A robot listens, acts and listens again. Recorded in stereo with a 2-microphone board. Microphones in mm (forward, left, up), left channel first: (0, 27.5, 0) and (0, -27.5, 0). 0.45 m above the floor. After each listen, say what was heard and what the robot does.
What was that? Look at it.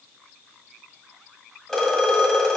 Turn 30° left.
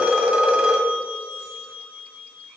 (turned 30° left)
So it is at 20° right. Turn 20° right.
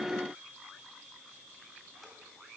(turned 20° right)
Keep listening.
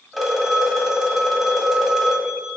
Facing the phone ringing.